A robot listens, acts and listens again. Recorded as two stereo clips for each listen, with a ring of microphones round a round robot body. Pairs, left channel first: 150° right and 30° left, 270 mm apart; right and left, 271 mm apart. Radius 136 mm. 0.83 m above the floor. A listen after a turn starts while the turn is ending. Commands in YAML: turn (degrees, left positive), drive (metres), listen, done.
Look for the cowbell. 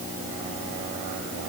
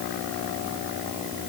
listen: true
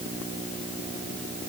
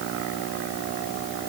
listen: true
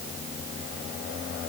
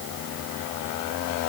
done: "I can't make out a cowbell to turn to."